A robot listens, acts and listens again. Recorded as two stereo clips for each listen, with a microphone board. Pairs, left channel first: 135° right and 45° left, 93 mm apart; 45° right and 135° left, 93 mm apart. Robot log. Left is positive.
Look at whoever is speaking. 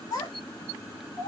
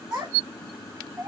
note: The child speaking: 160° right.
cmd yaw -160
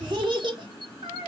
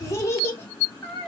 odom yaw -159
note: The child speaking is now 25° left.
cmd yaw +25
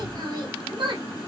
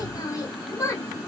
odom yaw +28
note: The child speaking is now 15° left.
cmd yaw +15
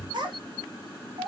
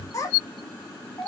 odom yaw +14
note: The child speaking is now 20° left.
cmd yaw +20
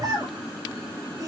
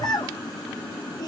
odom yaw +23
end: Facing the child speaking.